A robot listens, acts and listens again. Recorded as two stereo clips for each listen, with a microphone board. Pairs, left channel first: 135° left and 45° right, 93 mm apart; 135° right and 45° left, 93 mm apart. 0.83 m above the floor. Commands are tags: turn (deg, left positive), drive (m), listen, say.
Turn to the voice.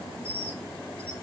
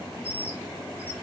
<listen/>
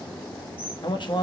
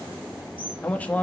<turn deg="155"/>
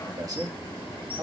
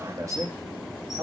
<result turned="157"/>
<say>Facing the man speaking, 1 to 2 m away.</say>